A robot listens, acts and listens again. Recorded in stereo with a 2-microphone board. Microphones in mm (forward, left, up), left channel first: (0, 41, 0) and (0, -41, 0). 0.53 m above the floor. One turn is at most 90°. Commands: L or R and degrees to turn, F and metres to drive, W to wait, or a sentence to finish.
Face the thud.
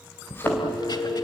L25
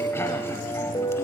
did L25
W
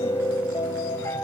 I heard a thud, but can't make it out now. It was about straight ahead or 130° left.